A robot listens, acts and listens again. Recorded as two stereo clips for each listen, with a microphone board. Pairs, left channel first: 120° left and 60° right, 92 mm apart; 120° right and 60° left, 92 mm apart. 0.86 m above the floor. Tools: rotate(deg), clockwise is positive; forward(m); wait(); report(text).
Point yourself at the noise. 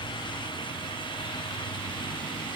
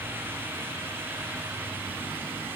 wait()
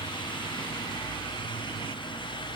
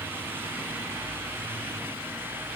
wait()
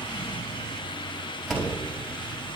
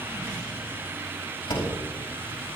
rotate(150)
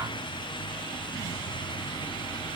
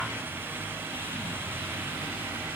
report("Facing where the door slam came from. I can't hear it now.")